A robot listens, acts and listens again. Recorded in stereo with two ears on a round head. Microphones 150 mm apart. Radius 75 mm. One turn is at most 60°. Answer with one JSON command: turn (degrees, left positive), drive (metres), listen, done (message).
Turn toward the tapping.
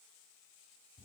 {"listen": true}
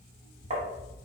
{"turn": -45}
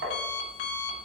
{"turn": -60}
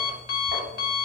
{"turn": -30}
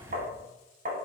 {"turn": -50}
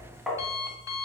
{"done": "Found it: tapping, straight ahead."}